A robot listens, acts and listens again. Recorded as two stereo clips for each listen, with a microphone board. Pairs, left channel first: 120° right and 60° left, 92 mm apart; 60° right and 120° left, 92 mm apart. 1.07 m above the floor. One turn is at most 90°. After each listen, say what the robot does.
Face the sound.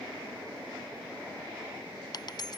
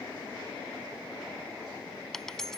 Turn 90° right.
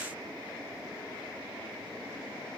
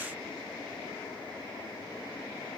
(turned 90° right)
Turn 55° right.
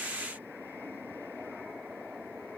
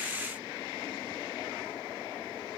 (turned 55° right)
Facing where the dropped coin came from. I can't hear it now.